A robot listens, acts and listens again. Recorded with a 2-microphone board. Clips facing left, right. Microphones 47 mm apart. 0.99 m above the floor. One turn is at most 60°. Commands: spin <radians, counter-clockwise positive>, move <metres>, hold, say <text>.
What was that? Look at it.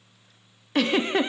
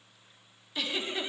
spin 1.05
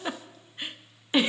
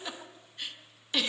spin 0.52
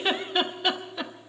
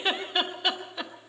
say Facing the giggle.